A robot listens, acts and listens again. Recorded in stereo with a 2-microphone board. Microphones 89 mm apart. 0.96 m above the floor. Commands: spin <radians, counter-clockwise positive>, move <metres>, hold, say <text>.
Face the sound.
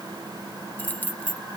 spin 0.35
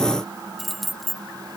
say Facing the keys jangling.